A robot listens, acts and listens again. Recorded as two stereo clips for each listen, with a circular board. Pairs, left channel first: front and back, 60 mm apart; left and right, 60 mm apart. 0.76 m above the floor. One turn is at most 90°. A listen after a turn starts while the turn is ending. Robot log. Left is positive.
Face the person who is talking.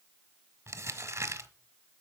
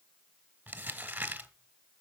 cmd idle
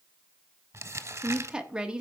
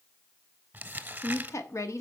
note: The woman speaking: 105° left.
cmd yaw +90
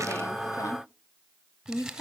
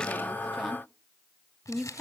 end: Facing the woman speaking.